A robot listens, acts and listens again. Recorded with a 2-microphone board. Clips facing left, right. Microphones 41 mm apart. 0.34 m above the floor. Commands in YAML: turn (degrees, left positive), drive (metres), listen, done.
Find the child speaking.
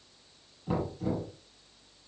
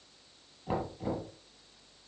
listen: true
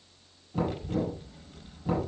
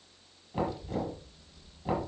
turn: 55
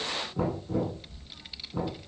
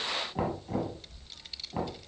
turn: 15
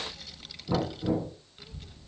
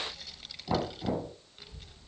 done: "Facing the child speaking."